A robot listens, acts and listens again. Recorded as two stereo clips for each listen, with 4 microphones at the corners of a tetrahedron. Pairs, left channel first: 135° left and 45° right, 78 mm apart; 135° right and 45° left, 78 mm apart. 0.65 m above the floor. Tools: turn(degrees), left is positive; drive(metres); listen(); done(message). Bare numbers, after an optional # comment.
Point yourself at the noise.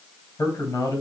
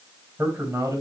# The man speaking: 95° left.
turn(95)
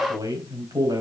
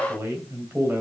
# The man speaking is now 15° right.
turn(-15)
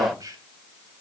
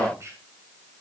done("Found it: a man speaking, straight ahead.")